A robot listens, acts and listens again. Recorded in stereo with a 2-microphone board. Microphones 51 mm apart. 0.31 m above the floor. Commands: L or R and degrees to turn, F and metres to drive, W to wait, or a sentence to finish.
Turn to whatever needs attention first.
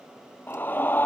L40
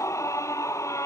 L100
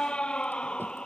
L20
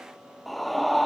Facing the scream.